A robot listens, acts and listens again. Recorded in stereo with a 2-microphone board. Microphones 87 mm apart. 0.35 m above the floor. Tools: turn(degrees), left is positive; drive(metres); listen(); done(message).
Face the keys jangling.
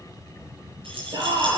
turn(degrees=-90)
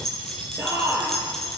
done("Facing the keys jangling, over 4 m away.")